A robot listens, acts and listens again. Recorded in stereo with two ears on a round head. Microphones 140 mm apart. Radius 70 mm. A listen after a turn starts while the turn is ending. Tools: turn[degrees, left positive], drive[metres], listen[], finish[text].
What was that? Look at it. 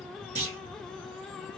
Thought: The clunk: about 50° right or 130° right.
Action: turn[-50]
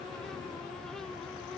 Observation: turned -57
Action: listen[]
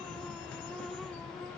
Action: finish[I heard a clunk, but can't make it out now. It was about 5° left or 70° right.]